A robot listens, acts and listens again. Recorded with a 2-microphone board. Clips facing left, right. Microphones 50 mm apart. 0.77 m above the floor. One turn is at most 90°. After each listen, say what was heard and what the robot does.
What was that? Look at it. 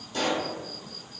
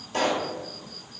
The pop: about 65° right or 115° right. Turn 65° right.
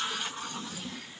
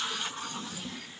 Keep listening.
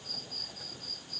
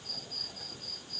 I heard a pop, but can't make it out now. It was about straight ahead or 50° right.